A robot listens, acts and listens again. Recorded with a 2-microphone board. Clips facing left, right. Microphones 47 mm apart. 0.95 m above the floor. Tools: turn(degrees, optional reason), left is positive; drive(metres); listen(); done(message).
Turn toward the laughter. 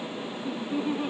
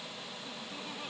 turn(degrees=20, reason="The laughter: about 20° left or 160° left.")
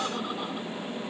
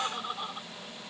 done("Facing the laughter.")